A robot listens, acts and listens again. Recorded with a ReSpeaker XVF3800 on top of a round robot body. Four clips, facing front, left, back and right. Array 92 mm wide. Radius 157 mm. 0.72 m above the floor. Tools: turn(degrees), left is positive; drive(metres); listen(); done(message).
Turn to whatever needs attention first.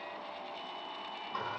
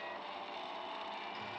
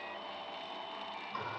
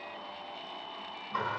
listen()
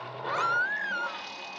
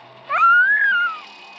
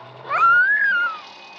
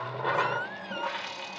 turn(degrees=125)
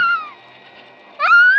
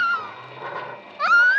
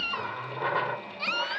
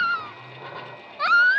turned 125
turn(degrees=15)
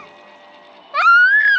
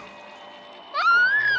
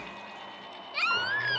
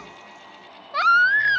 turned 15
done("Facing the baby crying.")